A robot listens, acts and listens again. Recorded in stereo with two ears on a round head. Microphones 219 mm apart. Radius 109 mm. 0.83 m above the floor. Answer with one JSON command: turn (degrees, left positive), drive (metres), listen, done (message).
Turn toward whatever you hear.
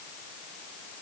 {"listen": true}
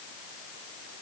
{"listen": true}
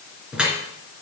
{"turn": -30}
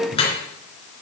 {"turn": 25}
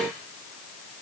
{"listen": true}
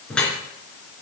{"done": "Found it: dripping, straight ahead."}